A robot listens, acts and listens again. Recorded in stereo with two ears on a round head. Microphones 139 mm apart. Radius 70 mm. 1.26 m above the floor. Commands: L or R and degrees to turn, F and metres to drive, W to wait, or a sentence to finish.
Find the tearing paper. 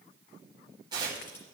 R25
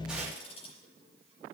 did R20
W
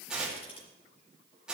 Facing the tearing paper.